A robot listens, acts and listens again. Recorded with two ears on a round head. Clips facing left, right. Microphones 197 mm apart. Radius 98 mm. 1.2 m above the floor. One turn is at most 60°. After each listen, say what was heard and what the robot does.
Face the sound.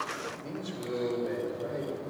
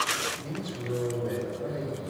Turn 30° left.
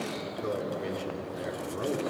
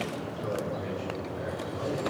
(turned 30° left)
So it is at 140° left. Turn 60° left.
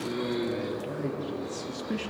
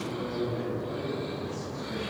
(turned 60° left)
The man speaking is now 80° left. Turn 60° left.
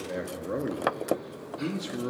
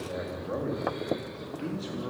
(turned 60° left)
The man speaking is now 35° left. Turn 35° left.
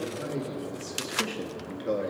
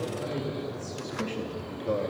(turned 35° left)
The man speaking is now 15° left. Turn 15° left.
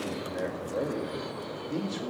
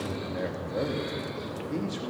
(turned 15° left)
Facing the man speaking.